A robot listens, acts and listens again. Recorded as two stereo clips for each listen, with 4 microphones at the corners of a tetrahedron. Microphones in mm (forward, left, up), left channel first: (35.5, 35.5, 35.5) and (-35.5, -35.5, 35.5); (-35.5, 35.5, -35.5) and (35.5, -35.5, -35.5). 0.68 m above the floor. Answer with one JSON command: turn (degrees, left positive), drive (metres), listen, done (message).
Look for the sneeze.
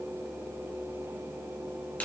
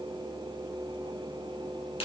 {"listen": true}
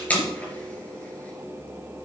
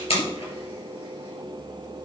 {"listen": true}
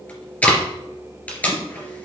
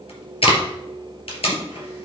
{"done": "I can't make out a sneeze, only tape being pulled."}